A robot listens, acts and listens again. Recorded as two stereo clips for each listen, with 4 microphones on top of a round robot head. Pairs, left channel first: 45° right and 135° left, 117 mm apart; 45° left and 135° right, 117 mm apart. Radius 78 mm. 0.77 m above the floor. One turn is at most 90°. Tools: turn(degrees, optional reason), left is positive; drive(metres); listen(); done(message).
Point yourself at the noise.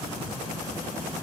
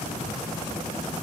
listen()
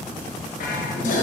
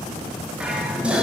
turn(degrees=-55, reason="The dishes clattering: 55° right.")
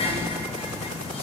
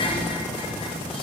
done("Found it: dishes clattering, straight ahead.")